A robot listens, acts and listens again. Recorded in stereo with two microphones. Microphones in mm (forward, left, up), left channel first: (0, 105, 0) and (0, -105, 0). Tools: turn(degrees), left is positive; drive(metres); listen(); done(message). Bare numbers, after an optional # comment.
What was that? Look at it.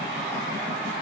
listen()
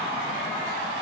listen()
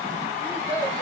turn(30)
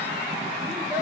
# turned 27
listen()
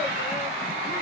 listen()
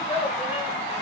# So it is at 10° right.
turn(-10)
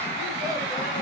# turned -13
listen()
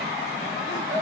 listen()
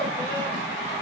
done("Facing where the child speaking came from. I can't hear it now.")